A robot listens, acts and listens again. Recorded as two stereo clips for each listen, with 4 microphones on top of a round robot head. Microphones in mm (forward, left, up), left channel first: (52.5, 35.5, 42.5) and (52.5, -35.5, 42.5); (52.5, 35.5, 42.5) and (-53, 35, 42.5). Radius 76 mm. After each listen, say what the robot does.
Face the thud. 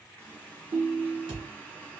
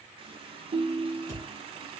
Turn 100° right.
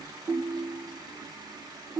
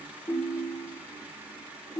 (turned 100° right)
Facing where the thud came from. I can't hear it now.